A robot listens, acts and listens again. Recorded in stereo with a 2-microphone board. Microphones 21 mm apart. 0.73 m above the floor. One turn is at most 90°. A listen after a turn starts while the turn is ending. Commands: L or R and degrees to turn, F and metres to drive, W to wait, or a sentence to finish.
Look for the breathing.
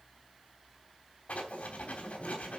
W
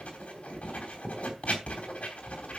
W
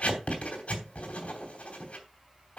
I can't make out breathing, only writing.